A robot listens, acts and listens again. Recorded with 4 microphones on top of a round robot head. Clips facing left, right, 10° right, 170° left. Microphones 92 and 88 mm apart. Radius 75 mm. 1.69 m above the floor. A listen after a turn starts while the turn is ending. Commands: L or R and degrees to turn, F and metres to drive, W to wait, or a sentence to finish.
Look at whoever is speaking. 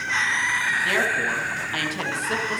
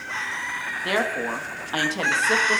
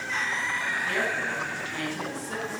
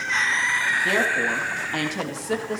R150
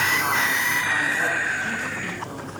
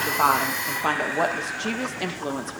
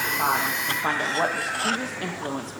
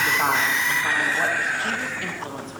R70
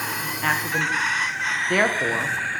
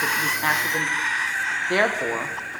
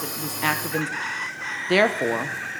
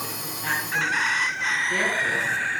Found it: a woman speaking, straight ahead, 1 to 2 m away.